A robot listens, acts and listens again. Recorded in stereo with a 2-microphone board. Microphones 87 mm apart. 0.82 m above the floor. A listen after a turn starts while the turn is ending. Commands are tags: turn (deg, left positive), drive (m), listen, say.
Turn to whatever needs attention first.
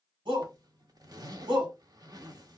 <turn deg="-70"/>
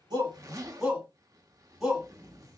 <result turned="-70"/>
<say>Found it: a shout, straight ahead, 2 to 4 m away.</say>